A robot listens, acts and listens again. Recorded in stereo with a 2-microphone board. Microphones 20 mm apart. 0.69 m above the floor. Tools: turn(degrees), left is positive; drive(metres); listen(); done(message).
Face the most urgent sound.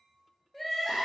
turn(degrees=30)
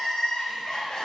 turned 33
turn(degrees=140)
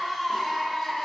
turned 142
done("Facing the crying.")